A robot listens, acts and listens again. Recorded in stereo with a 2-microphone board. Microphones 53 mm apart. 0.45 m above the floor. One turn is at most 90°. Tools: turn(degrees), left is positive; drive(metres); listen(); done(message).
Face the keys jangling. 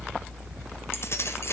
turn(degrees=55)
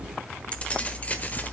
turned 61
turn(degrees=30)
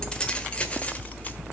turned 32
turn(degrees=25)
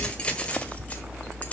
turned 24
turn(degrees=25)
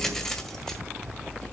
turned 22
turn(degrees=10)
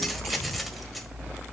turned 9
done("Facing the keys jangling.")